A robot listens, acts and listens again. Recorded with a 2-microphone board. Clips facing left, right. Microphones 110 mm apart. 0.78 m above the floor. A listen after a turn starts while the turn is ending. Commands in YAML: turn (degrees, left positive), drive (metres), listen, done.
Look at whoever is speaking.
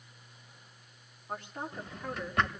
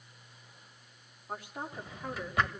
turn: -30
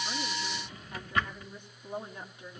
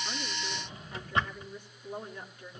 turn: 20
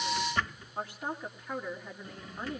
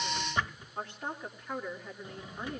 turn: 10
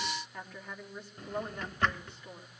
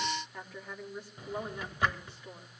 done: "Found it: a woman speaking, straight ahead."